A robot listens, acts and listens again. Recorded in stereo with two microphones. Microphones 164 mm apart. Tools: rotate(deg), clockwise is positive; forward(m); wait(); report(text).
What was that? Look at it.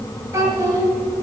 rotate(25)
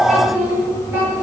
rotate(30)
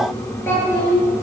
rotate(-10)
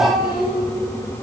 report("Found it: a child speaking, straight ahead.")